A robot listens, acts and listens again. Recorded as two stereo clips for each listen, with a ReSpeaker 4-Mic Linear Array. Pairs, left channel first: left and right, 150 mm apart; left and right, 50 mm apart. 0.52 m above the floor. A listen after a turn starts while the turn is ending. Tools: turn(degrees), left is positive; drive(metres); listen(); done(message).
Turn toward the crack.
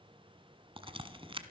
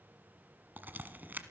turn(degrees=-35)
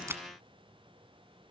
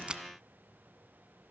listen()
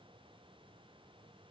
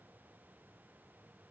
done("I heard a crack, but can't make it out now. It was about straight ahead or 110° right.")